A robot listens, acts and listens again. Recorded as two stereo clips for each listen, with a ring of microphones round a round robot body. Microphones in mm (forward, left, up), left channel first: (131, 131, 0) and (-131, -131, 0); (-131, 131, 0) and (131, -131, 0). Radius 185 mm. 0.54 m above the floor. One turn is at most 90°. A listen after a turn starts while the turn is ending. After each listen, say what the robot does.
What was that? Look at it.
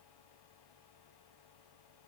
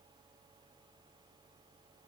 Keep listening.
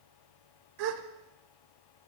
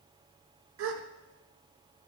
Turn 90° right.
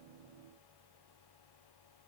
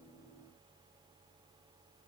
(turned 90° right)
Turn 10° right.
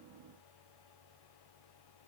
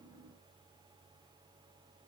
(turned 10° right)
Facing where the gasp came from. I can't hear it now.